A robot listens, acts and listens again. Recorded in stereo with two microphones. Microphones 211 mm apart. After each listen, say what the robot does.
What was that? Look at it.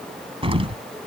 Turn 25° right.
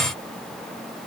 Keep listening.
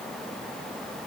I heard an explosion, but can't make it out now. It was about straight ahead or 130° right.